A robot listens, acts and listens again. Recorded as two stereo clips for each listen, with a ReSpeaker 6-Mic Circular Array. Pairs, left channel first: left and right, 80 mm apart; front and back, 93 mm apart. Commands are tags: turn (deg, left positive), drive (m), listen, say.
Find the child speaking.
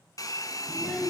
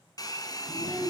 <say>Found it: a child speaking, straight ahead.</say>